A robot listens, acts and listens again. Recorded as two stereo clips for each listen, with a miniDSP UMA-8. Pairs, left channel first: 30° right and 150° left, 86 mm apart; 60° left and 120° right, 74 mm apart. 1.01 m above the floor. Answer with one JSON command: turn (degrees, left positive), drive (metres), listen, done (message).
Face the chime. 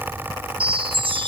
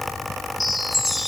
{"turn": 150}
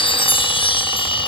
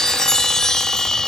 {"turn": -20}
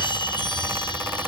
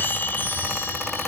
{"listen": true}
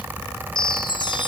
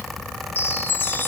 {"done": "Found it: a chime, straight ahead."}